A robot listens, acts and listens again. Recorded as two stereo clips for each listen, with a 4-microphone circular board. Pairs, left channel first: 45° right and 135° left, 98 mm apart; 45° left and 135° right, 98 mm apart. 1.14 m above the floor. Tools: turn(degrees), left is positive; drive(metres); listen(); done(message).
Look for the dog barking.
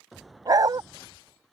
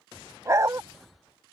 turn(degrees=175)
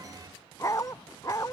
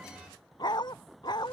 turn(degrees=10)
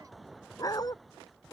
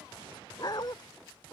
done("Found it: a dog barking, straight ahead.")